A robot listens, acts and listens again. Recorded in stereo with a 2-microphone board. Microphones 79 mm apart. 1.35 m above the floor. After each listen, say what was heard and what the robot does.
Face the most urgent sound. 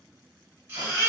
The baby crying: about 30° right or 150° right. Turn 30° right.
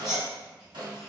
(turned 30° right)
Found it: a baby crying, straight ahead, 1 to 2 m away.